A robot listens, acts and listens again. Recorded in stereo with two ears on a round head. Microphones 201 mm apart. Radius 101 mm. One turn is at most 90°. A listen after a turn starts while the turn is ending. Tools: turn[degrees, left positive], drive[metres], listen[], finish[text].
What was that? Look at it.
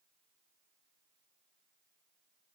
Action: listen[]
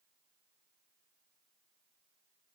Action: listen[]
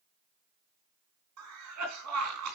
Action: turn[-90]
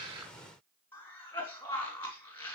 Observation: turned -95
Thought: So it is at 10° left.
Action: turn[10]
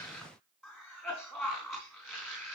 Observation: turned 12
Action: finish[Facing the cough, 2 to 4 m away.]